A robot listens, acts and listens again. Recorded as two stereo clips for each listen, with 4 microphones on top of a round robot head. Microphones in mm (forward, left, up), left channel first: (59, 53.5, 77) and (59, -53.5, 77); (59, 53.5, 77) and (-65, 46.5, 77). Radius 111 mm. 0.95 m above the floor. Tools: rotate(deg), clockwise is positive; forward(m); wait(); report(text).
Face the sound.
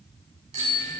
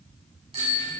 rotate(125)
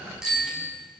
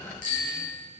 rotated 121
report("Found it: a bicycle bell, straight ahead.")